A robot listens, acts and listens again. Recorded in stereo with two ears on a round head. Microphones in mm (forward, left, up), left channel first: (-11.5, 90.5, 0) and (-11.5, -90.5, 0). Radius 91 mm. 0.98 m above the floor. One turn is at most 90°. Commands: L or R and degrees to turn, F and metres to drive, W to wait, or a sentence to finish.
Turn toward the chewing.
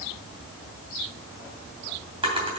W
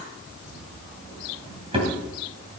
W
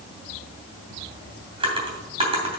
I can't make out chewing, only a drawer.